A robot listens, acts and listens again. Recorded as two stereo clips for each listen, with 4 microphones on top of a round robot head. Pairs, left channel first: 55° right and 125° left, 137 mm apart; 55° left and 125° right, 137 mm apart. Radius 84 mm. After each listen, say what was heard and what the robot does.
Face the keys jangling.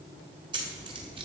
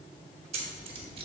The keys jangling: 175° right. Turn 175° right.
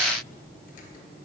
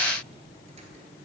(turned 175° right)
Keep listening.
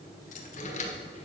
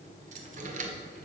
The keys jangling is now 95° right. Turn 95° right.
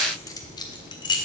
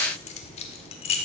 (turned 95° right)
Facing the keys jangling.